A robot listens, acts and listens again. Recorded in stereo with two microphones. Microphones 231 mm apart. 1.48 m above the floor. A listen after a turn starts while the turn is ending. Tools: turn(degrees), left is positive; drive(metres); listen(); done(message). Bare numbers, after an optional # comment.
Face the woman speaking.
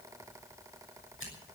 listen()
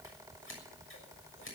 listen()
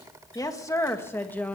turn(30)
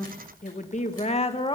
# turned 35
# So it is at 160° left.
turn(160)
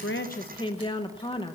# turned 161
# The woman speaking is now 20° left.
turn(20)
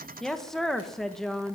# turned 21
done("Found it: a woman speaking, straight ahead, 1 to 2 m away.")